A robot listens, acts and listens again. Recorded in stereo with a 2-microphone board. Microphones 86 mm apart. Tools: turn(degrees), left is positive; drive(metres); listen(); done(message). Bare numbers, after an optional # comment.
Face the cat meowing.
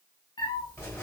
# The cat meowing: about 65° left or 115° left.
turn(65)
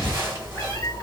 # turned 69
# So it is at 40° left.
turn(40)
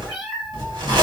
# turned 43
done("Facing the cat meowing.")